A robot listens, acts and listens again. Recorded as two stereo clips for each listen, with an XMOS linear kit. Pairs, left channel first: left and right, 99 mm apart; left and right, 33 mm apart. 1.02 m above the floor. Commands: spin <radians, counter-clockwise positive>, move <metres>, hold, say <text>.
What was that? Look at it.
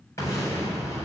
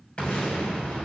spin 0.52
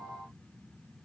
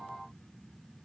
hold
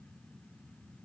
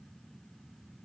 say I heard an explosion, but can't make it out now. It was about straight ahead or 120° left.